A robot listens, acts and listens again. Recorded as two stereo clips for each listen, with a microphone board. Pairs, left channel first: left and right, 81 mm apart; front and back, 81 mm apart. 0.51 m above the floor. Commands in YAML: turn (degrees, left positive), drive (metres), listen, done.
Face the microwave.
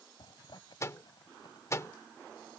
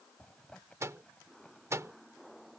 turn: 135
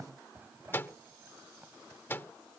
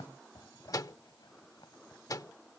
turn: 30
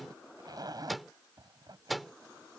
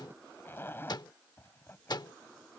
done: "Found it: a microwave, straight ahead."